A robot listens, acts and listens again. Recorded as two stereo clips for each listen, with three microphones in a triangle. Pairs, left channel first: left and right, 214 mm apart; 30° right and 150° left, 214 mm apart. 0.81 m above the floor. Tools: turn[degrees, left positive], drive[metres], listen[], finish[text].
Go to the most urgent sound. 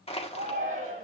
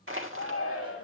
Thought: The shout: 35° right.
Action: turn[-35]
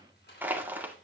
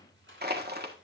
Action: listen[]
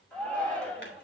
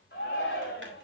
Action: drive[1.0]
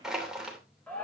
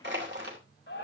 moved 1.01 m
Action: drive[1.0]
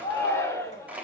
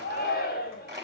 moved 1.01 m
Thought: The shout is now 15° left.
Action: turn[15]
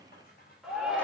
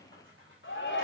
Action: drive[1.0]
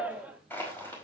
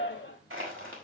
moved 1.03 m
Action: drive[1.0]
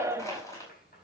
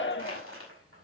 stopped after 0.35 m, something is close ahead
Thought: The shout is now 15° right.
Action: turn[-15]
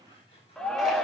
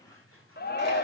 Action: finish[Arrived at the shout, straight ahead.]